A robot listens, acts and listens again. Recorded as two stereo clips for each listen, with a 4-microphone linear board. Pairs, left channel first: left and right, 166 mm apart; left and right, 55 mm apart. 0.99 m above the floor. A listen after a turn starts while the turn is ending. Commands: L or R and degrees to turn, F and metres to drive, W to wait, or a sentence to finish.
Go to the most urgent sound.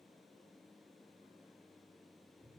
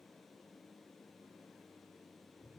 W
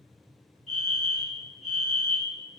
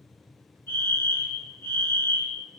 L45
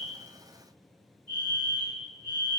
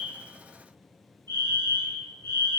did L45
L85
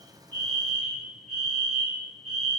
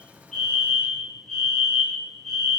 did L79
F1.0
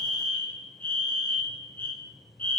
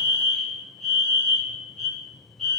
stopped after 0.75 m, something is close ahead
L15
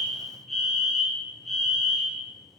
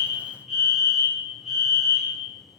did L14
I am next to the fire alarm.